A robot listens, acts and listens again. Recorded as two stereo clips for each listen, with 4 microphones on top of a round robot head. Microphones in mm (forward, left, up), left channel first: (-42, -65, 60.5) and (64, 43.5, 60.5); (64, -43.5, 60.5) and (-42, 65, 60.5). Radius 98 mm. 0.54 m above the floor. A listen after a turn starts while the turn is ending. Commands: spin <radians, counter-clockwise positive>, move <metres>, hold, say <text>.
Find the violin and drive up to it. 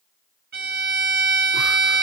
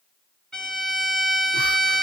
spin 0.70
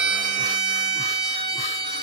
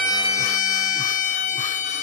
spin -0.17
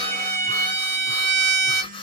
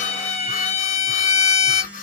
move 1.0
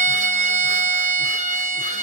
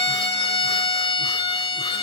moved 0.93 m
spin 0.17
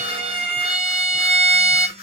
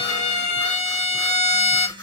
move 1.0
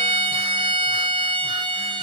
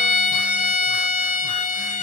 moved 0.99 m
spin -0.17
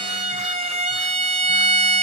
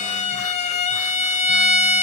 move 1.0
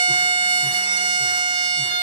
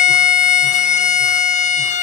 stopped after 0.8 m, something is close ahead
spin -0.17
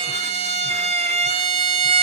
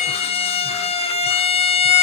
say I am next to the violin.